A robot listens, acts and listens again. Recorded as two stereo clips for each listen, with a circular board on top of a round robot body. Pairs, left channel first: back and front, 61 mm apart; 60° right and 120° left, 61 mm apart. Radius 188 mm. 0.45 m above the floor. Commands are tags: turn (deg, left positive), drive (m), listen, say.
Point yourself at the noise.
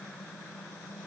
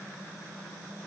<listen/>
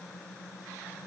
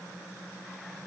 <listen/>
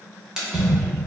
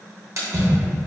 <turn deg="80"/>
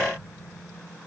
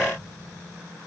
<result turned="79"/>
<say>Facing where the splash came from. I can't hear it now.</say>